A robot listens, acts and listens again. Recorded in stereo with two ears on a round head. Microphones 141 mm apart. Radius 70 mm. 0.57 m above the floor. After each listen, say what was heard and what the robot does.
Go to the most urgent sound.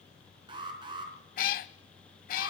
The alarm: about 30° right or 150° right. Turn 30° right.
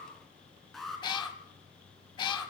Drive 1.0 m forward.
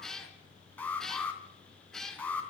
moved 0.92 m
The alarm is now 10° left. Turn 10° left.
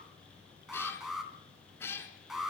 Drive 1.0 m forward.
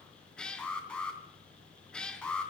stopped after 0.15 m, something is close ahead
Something is in my way. I am facing the alarm but have not reached it.